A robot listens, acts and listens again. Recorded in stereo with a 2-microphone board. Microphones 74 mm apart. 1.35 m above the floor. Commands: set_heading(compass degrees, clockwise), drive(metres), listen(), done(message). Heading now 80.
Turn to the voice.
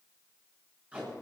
listen()
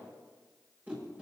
listen()
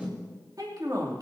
set_heading(140)
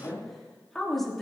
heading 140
done("Facing the woman speaking.")